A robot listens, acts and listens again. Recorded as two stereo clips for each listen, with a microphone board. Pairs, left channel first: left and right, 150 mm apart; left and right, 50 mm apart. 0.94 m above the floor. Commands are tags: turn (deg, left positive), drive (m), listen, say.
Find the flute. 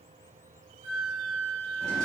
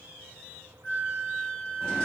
<turn deg="55"/>
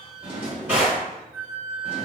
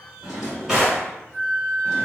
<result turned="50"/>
<say>Found it: a flute, straight ahead, under 1 m away.</say>